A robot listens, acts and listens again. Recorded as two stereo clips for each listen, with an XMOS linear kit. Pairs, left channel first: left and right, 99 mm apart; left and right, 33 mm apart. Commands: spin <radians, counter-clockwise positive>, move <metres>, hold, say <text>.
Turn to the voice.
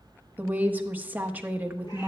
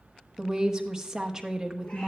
spin -0.35
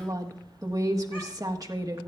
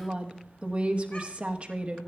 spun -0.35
spin -2.44
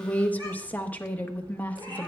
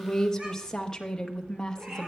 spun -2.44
spin 0.26
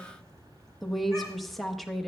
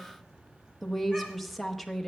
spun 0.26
say Facing the woman speaking.